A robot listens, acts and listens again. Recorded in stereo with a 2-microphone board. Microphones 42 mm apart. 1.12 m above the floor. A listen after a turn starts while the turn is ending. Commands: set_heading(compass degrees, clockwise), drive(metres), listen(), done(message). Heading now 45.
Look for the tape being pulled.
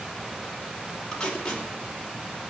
set_heading(30)
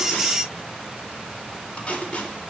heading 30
set_heading(240)
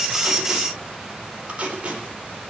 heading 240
set_heading(270)
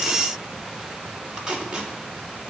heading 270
set_heading(290)
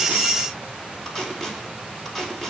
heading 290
done("Facing the tape being pulled.")